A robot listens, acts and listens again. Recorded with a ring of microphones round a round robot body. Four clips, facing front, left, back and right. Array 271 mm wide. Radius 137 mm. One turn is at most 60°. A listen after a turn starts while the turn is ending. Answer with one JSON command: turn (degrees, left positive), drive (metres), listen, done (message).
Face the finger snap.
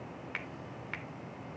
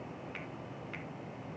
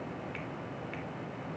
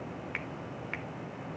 {"turn": -55}
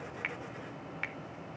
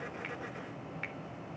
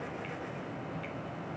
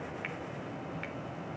{"done": "Found it: a finger snap, straight ahead, 1 to 2 m away."}